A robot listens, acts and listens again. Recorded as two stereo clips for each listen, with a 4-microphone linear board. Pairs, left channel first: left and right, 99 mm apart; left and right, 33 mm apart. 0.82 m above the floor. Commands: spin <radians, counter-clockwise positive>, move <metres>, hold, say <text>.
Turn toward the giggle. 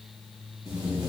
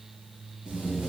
hold
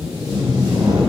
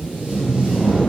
hold
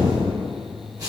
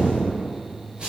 say I can't make out a giggle, only tape being pulled.